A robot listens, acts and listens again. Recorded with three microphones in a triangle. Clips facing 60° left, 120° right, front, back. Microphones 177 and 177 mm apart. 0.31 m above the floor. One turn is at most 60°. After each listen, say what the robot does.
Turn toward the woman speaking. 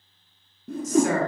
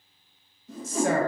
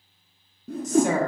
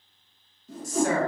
Turn 60° right.
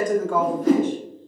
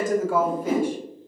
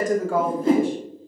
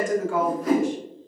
Turn 40° right.
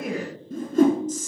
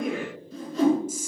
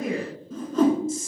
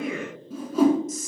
Turn 45° right.
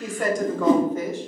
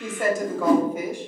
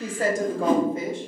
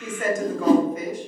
Turn 50° right.
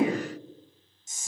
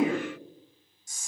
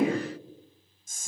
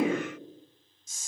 Facing the woman speaking, 1 to 2 m away.